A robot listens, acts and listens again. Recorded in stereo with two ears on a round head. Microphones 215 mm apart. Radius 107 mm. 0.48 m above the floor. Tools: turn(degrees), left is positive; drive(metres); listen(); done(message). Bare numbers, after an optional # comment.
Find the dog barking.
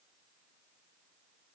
listen()
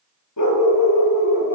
turn(90)
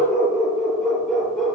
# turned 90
done("Facing the dog barking, 2 to 4 m away.")